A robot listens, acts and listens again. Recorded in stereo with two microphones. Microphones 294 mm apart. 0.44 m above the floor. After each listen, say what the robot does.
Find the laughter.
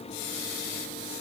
Keep listening.
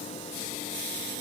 Keep listening.
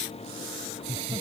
Turn 20° right.
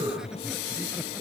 Turn 30° right.
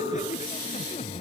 Turn 20° left.
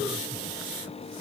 Keep listening.
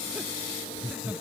Found it: laughter, straight ahead.